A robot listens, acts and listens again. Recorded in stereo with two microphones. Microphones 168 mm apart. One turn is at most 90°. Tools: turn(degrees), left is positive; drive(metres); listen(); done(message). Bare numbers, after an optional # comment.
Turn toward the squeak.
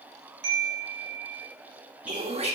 turn(-30)
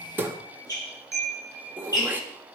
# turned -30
# So it is at 25° left.
turn(25)
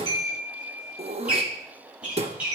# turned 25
# The squeak is now 10° right.
turn(-10)
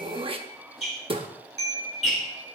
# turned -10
done("Found it: a squeak, straight ahead.")